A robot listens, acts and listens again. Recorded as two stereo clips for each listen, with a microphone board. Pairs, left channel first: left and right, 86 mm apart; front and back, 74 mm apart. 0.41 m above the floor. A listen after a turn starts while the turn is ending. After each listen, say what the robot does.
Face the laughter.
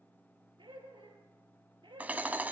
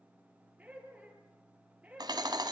Turn 105° right.
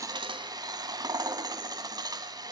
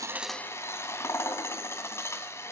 Keep listening.
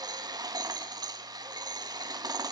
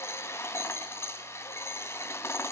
Keep listening.
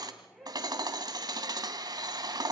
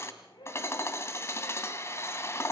Found it: laughter, straight ahead, over 4 m away.